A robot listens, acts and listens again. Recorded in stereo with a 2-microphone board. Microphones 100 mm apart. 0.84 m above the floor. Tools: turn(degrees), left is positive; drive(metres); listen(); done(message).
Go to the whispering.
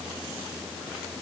listen()
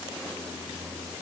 listen()
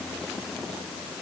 done("I can't make out whispering.")